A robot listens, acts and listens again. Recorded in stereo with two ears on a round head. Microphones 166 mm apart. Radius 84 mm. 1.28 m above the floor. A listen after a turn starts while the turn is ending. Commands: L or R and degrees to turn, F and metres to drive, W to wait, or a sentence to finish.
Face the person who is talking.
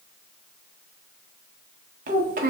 R45
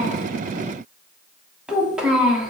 Found it: a child speaking, straight ahead, under 1 m away.